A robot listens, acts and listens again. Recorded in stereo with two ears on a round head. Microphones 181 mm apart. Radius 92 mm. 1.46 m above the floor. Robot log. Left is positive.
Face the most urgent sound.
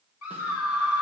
cmd yaw +90
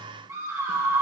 note: So it is at 15° right.
cmd yaw -15
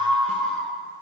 end: Facing the scream, 1 to 2 m away.